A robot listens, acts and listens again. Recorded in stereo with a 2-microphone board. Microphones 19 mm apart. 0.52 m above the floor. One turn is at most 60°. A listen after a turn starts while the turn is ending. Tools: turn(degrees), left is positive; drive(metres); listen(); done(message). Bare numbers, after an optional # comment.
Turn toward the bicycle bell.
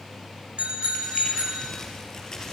# The bicycle bell: about 75° right or 105° right.
turn(-60)
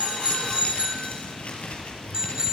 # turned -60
# So it is at 45° right.
turn(-45)
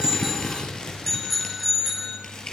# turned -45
done("Found it: a bicycle bell, straight ahead.")